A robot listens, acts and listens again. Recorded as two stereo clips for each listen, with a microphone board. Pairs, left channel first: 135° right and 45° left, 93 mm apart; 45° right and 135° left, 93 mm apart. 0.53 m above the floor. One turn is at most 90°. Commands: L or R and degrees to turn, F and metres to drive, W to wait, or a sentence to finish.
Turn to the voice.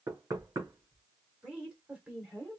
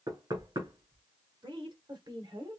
L90
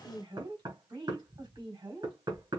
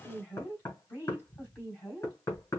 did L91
L20
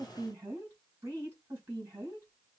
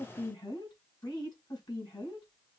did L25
R10
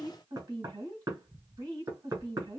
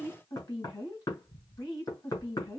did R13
Facing the woman speaking, 2 to 4 m away.